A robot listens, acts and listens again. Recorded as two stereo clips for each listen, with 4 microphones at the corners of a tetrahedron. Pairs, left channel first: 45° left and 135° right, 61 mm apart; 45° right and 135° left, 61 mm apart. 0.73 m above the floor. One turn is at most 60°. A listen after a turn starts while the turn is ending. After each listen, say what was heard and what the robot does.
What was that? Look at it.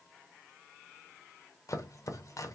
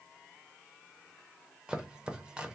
The chopping: 60° left. Turn 60° left.
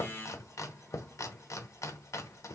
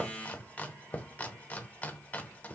The chopping is now 20° left. Turn 20° left.
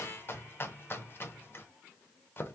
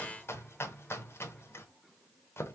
Found it: chopping, straight ahead, under 1 m away.